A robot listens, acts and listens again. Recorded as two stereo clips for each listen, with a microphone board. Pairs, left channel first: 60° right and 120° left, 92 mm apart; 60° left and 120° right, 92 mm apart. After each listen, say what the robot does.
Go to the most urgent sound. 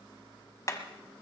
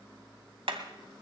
Keep listening.
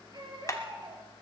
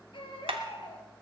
Turn 80° left.
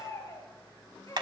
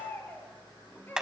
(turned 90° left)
Drive 1.0 m forward.
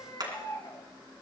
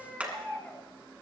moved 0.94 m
Turn 15° right.
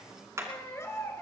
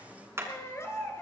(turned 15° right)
Drive 1.0 m forward.
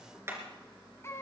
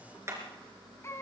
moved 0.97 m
Drive 1.0 m forward.
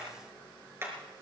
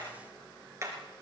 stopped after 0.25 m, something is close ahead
Keep listening.
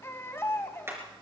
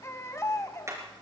Arrived at the baby crying, straight ahead.